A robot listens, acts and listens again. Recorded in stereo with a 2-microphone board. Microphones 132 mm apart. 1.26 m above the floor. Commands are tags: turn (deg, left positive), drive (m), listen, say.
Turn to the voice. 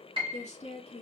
<turn deg="55"/>
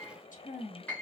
<turn deg="80"/>
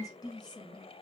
<turn deg="35"/>
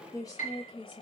<turn deg="35"/>
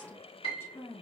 <turn deg="20"/>
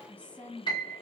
<turn deg="10"/>
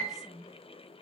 <say>Facing the woman speaking.</say>